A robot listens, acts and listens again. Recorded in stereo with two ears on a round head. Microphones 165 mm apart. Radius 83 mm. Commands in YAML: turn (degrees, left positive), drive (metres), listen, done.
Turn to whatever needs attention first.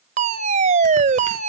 turn: -40
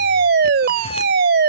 turn: -90
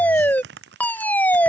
turn: 10
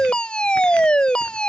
done: "Facing the fire alarm."